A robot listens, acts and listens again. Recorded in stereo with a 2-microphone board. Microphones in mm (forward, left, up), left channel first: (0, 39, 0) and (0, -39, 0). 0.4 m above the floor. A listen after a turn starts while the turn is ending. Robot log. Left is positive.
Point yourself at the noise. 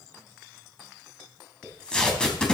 cmd yaw +30
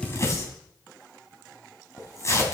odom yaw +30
note: So it is at 140° left.
cmd yaw +140
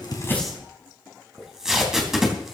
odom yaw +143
end: Facing the tape being pulled, 2 to 4 m away.